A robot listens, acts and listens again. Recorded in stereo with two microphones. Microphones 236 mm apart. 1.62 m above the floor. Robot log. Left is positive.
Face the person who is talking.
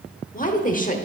note: The woman speaking: about 35° left or 145° left.
cmd yaw +35
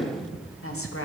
note: So it is at 115° left.
cmd yaw +115
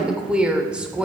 end: Facing the woman speaking.